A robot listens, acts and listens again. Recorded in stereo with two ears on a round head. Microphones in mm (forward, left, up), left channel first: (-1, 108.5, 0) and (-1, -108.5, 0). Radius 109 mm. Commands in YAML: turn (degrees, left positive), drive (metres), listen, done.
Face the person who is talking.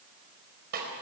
listen: true
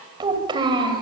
turn: -20
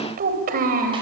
turn: -140
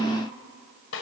listen: true
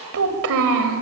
turn: -60
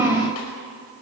turn: -10
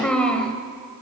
done: "Facing the child speaking."